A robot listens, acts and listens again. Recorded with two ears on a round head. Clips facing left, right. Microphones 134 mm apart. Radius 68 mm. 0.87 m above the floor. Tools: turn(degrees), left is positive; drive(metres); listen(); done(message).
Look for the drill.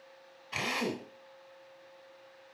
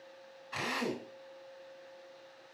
turn(degrees=25)
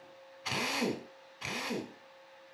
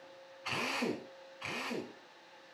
turn(degrees=135)
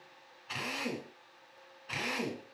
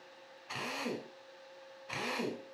done("Found it: a drill, straight ahead.")